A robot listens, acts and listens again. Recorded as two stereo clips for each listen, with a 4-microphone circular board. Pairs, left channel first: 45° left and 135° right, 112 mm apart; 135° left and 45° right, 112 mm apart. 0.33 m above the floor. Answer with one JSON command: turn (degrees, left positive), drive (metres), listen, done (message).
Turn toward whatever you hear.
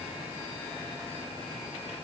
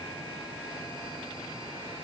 {"listen": true}
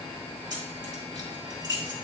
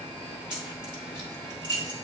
{"turn": -90}
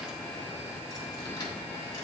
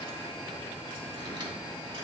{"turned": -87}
{"listen": true}
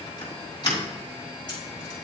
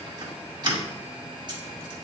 {"done": "Facing the keys jangling."}